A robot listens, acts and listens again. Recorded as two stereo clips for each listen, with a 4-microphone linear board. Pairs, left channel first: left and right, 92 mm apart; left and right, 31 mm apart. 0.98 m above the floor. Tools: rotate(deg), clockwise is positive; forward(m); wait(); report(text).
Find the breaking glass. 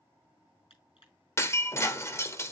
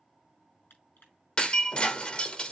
rotate(-30)
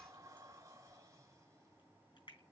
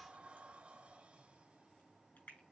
wait()
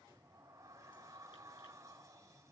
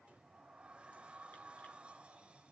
report("I heard breaking glass, but can't make it out now. It was about straight ahead or 120° left.")